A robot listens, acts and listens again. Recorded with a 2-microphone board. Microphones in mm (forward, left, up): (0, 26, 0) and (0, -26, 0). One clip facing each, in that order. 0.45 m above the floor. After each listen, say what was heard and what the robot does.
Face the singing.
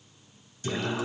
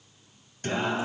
The singing: about 50° right or 130° right. Turn 50° right.
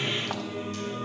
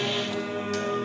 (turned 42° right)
So it is at 90° right. Turn 90° right.
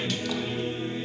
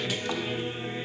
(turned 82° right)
The singing is now 10° right. Turn 10° right.
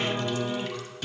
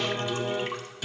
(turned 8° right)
Facing the singing, 1 to 2 m away.